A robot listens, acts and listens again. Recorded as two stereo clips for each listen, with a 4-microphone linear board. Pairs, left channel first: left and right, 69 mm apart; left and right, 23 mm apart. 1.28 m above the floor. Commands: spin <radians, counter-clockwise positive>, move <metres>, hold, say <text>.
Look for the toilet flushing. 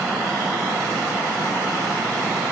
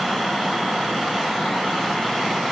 hold
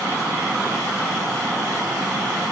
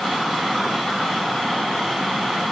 hold
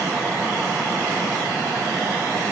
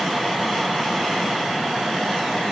say I can't make out a toilet flushing.